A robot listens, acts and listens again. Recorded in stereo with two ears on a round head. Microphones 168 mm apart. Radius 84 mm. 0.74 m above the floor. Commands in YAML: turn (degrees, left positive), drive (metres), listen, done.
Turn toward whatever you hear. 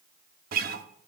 turn: -50
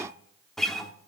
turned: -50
done: "Found it: a guitar, straight ahead."